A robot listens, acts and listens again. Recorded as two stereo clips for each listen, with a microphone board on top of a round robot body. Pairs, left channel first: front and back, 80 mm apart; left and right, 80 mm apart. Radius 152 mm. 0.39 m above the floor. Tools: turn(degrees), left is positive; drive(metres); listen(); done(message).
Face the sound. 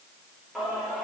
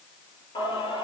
turn(degrees=90)
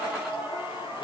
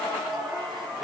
done("Found it: singing, straight ahead, over 4 m away.")